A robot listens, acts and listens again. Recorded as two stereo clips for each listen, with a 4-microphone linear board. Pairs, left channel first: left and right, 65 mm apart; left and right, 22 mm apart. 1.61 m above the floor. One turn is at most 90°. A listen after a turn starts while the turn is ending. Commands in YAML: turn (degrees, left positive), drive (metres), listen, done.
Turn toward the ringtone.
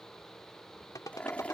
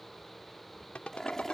turn: 70
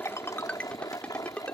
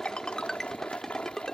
turn: 20
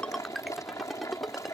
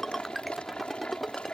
done: "Found it: a ringtone, straight ahead."